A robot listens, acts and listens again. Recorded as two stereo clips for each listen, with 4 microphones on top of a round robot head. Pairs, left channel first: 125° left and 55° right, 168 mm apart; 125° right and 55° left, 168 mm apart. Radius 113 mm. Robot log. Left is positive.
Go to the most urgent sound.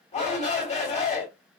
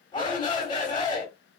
note: The shout: 175° left.
cmd yaw +175
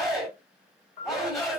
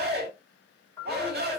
note: The shout is now 35° left.
cmd yaw +35
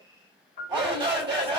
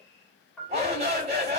cmd fwd 1.0
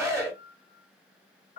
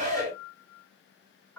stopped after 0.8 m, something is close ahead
note: The shout is now 15° left.
cmd yaw +15
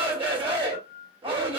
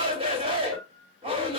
end: Blocked. The shout is further on, straight ahead.